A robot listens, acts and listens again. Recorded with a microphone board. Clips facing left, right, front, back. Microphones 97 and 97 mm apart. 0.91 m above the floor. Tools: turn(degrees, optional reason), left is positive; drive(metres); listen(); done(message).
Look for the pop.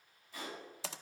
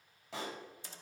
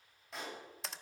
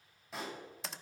turn(degrees=-90, reason="The pop: 90° right.")
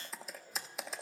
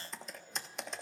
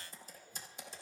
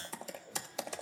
done("I heard a pop from this way, but can't make it out now.")